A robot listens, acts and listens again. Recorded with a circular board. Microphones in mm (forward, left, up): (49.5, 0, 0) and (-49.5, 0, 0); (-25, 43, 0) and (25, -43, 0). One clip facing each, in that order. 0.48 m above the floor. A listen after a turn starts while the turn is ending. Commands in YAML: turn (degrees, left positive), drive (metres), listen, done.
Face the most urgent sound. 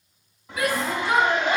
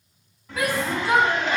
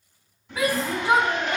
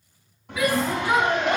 turn: 170
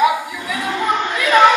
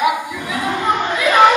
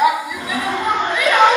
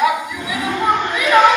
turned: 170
turn: 15
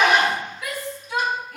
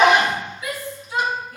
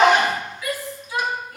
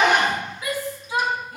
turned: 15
done: "Found it: a shout, straight ahead, 2 to 4 m away."